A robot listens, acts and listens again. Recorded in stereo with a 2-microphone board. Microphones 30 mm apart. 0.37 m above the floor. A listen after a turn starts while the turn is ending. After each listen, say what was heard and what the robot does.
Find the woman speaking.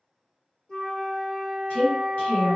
The woman speaking: about 50° left or 130° left. Turn 50° left.
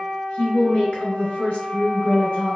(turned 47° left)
So it is at 65° left. Turn 65° left.
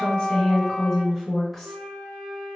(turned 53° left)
The woman speaking is now 10° left. Turn 10° left.
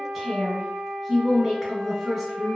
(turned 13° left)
Facing the woman speaking.